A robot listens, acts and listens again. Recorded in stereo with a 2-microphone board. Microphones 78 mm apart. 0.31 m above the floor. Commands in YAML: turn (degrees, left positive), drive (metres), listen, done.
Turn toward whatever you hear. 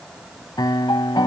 turn: 70
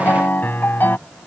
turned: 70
turn: 30
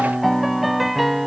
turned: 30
done: "Found it: a piano, straight ahead."